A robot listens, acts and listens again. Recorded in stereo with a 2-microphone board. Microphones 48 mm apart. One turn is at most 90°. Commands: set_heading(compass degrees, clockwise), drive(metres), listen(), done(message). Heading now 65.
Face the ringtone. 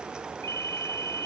set_heading(335)
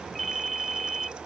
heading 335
done("Facing the ringtone.")